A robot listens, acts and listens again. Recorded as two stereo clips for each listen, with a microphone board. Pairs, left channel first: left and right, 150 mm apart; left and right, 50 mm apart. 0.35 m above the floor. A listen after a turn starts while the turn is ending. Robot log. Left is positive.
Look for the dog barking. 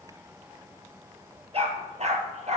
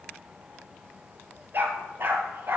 note: The dog barking: about 50° right or 130° right.
cmd yaw -50
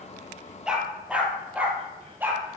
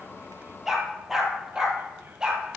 note: So it is at 15° right.
cmd yaw -15
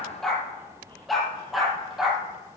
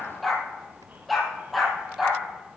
end: Found it: a dog barking, straight ahead, 2 to 4 m away.